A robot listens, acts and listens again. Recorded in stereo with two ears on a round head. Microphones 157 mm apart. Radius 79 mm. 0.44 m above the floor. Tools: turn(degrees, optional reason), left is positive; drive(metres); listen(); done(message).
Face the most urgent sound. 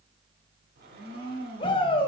turn(degrees=30, reason="The shout: about 30° left or 150° left.")
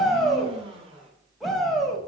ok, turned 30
done("Facing the shout.")